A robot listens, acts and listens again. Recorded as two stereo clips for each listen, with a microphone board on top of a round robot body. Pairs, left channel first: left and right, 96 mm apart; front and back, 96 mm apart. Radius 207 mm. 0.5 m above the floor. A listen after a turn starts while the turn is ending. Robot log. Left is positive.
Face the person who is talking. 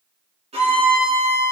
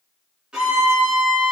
cmd idle
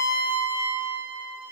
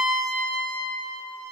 cmd idle
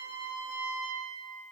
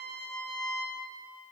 end: I can't make out anyone speaking, only a violin.